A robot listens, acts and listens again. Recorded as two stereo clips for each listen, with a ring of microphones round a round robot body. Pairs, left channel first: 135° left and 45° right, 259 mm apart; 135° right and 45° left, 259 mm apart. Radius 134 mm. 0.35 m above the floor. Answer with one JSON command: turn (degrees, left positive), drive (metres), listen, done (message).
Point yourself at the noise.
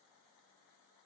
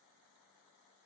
{"listen": true}
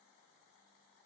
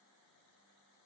{"listen": true}
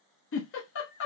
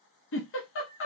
{"turn": 180}
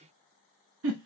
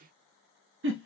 {"done": "Facing the giggle, under 1 m away."}